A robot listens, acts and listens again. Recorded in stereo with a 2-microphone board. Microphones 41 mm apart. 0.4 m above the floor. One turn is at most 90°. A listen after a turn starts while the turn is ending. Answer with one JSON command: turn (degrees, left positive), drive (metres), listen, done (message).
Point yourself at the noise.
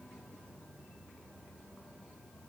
{"listen": true}
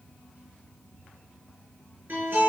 {"turn": -55}
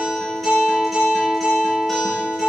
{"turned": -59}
{"done": "Facing the guitar."}